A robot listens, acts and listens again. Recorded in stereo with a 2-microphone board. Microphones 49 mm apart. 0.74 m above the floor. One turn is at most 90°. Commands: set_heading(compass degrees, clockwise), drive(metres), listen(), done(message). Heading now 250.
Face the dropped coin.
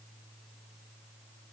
listen()
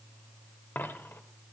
set_heading(205)
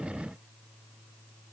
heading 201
listen()
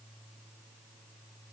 done("I heard a dropped coin, but can't make it out now. It was about 5° right or 85° left.")